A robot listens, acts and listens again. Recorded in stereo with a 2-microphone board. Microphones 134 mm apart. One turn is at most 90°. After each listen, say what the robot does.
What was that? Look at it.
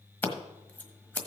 Turn 30° left.
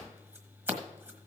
Turn 15° right.
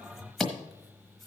Found it: scissors, straight ahead.